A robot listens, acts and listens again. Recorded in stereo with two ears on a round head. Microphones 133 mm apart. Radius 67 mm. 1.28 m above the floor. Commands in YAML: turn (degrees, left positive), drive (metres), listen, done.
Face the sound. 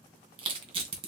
turn: -35
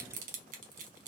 turn: -100
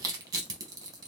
turn: -25
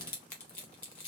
turn: 10
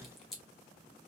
done: "Facing the crushing, under 1 m away."